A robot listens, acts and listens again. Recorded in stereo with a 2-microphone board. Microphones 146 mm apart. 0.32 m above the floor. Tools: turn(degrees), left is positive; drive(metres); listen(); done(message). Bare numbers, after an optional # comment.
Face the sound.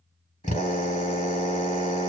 # The drill: about 60° left or 120° left.
turn(60)
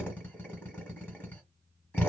# So it is at 15° left.
turn(15)
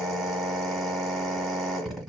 done("Found it: a drill, straight ahead, 1 to 2 m away.")